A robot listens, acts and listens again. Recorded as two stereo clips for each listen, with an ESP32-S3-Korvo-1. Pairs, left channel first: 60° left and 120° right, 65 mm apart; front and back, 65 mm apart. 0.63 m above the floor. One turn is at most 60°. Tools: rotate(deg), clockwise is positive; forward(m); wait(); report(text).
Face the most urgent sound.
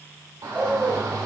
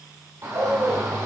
rotate(60)
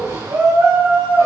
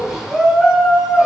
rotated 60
rotate(60)
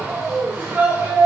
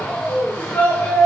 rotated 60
rotate(60)
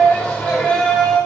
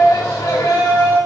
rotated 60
rotate(10)
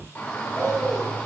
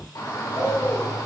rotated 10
report("Facing the shout, 1 to 2 m away.")